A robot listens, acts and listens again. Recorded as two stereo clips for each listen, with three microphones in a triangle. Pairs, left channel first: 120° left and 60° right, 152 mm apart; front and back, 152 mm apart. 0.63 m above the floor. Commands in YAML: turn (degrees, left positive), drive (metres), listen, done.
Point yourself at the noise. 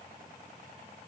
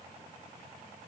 listen: true
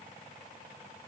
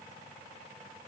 listen: true
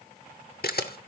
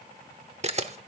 turn: 130
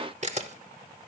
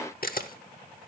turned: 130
turn: -20
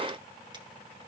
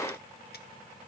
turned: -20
listen: true
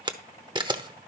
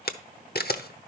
done: "Facing the camera shutter, under 1 m away."